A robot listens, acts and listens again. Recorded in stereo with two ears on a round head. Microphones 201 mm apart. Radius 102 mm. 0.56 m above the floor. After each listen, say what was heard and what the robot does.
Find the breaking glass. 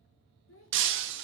The breaking glass: about 60° right or 120° right. Turn 60° right.
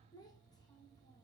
Keep listening.
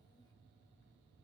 I heard breaking glass, but can't make it out now. It was about straight ahead or 60° right.